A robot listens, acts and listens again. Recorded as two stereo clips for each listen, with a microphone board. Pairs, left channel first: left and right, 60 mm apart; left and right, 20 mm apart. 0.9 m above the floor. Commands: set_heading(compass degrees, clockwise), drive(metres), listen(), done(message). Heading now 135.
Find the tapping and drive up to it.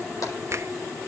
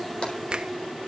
listen()
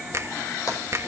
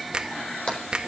set_heading(65)
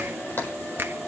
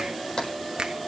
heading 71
set_heading(31)
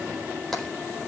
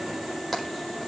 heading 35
drive(1.0)
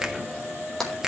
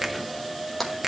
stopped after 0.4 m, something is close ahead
done("Blocked. The tapping is further on, straight ahead.")